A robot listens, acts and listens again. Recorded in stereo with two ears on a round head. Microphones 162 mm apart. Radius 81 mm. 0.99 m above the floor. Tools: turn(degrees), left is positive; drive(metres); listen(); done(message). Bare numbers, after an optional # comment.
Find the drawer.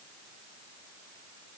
listen()
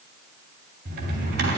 # The drawer: about 60° right or 120° right.
turn(-60)
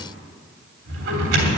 # So it is at 65° right.
turn(-65)
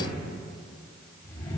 # The drawer is now 10° left.
turn(10)
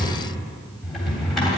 done("Found it: a drawer, straight ahead.")